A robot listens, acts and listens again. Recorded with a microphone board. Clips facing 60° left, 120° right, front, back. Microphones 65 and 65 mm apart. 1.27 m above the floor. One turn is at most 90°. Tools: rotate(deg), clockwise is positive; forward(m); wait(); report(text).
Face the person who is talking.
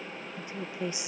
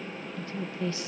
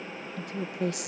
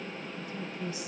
rotate(15)
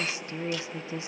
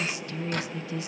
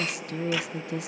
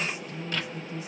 report("Facing the woman speaking, 1 to 2 m away.")